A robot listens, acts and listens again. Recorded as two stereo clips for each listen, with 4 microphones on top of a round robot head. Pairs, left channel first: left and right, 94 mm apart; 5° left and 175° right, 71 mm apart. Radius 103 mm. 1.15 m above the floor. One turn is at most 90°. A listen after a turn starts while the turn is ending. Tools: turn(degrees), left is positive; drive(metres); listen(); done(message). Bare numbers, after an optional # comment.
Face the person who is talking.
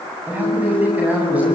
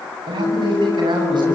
# The man speaking: 165° right.
turn(-90)
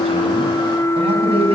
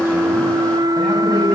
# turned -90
# Nothing new. It was at 75° right.
turn(-75)
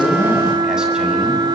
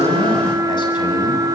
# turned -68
# Nothing new. It was at 10° right.
turn(-10)
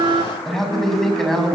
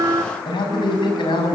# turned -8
done("Found it: a man speaking, straight ahead.")